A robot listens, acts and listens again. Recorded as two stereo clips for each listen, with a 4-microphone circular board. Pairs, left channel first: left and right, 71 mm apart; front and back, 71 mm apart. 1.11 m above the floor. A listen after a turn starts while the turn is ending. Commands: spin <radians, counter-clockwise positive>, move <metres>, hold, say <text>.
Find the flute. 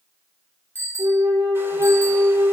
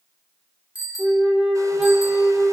spin -1.83
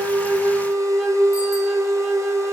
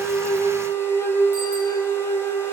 spin -0.17
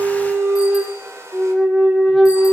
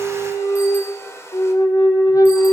say Facing the flute.